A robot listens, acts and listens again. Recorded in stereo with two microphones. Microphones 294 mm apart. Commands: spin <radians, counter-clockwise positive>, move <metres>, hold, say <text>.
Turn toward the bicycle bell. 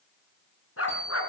spin 1.13
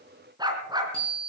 spin 0.96
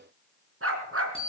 spin 0.35
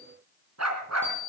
say Facing the bicycle bell, over 4 m away.